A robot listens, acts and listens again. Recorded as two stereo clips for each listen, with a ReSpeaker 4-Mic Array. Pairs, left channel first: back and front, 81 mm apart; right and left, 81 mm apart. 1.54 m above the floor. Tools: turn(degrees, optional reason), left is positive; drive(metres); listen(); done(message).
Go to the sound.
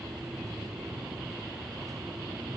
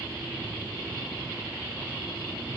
listen()
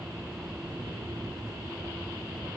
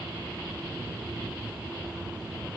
listen()
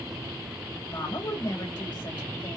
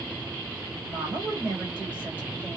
turn(degrees=160, reason="The woman speaking: 160° left.")
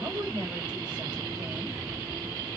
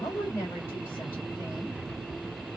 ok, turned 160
turn(degrees=-25, reason="The woman speaking is now 25° right.")
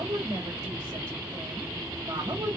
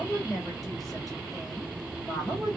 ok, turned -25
drive(metres=1.0)
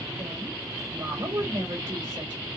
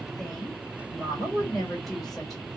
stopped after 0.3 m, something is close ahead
done("Blocked. The woman speaking is further on, straight ahead.")